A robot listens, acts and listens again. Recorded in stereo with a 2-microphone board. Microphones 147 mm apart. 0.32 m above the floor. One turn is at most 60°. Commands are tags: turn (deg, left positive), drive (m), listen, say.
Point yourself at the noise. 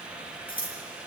<turn deg="60"/>
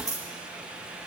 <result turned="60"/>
<turn deg="25"/>
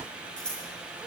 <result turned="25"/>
<say>Facing the scissors, over 4 m away.</say>